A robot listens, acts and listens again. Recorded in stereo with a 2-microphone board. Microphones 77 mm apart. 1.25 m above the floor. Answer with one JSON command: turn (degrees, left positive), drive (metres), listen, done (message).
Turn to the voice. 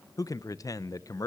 {"turn": 50}
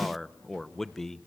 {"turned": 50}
{"done": "Facing the man speaking, under 1 m away."}